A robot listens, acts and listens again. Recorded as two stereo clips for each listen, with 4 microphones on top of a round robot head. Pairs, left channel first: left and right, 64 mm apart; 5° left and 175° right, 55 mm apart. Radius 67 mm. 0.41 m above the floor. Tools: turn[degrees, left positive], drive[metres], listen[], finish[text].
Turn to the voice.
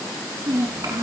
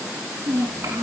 Thought: The child speaking: 135° right.
Action: turn[-135]
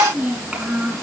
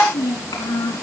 Thought: The child speaking is now 20° right.
Action: turn[-20]
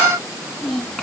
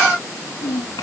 Action: finish[Facing the child speaking, 2 to 4 m away.]